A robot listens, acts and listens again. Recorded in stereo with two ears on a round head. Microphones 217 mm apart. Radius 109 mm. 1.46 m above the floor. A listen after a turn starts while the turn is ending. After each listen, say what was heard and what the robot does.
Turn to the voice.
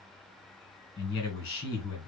The man speaking: about 45° left or 135° left. Turn 45° left.
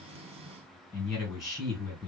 Found it: a man speaking, straight ahead.